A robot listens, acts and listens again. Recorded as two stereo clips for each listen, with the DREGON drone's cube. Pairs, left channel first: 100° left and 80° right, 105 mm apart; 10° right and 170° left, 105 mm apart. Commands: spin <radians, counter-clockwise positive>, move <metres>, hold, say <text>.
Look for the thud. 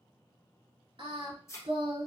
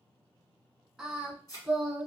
spin 0.70
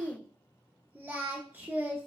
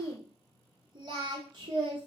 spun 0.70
say Facing where the thud came from. I can't hear it now.